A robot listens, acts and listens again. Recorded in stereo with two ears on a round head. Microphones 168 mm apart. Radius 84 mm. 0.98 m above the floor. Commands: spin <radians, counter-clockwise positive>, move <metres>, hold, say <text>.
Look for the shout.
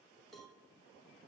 hold
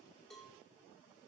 hold
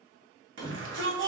spin -1.31
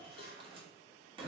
spin -0.52
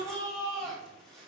say Facing the shout, 2 to 4 m away.